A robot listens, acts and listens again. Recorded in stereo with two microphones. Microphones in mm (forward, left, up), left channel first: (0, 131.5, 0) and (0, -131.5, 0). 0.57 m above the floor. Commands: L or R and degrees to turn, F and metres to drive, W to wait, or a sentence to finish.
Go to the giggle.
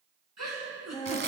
R90
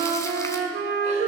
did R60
R30
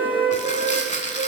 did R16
R15
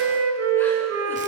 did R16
Facing where the giggle came from. I can't hear it now. I did not reach it.